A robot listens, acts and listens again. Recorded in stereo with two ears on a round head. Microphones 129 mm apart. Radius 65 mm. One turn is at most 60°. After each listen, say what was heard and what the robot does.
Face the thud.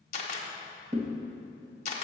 The thud: about 55° right or 125° right. Turn 55° right.
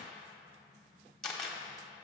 Keep listening.
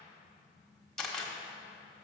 I heard a thud, but can't make it out now. It was about straight ahead or 70° right.